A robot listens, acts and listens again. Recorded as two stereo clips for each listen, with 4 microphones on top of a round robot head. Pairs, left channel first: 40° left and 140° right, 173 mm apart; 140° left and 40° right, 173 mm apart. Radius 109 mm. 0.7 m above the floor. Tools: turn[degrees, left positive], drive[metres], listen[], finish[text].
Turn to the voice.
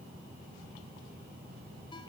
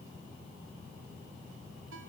Action: listen[]
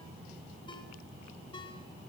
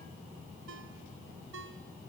Action: listen[]
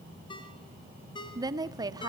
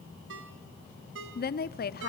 Thought: The woman speaking: 150° left.
Action: turn[150]
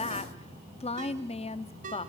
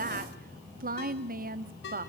Thought: The woman speaking is now 10° right.
Action: turn[-10]
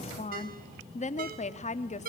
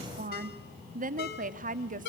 Action: finish[Found it: a woman speaking, straight ahead, 1 to 2 m away.]